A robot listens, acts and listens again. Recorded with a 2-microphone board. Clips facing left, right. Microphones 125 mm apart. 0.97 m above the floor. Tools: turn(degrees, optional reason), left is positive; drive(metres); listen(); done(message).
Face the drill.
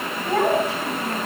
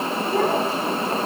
listen()
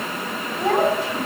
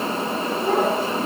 listen()
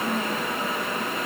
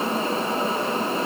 done("I can't make out a drill to turn to.")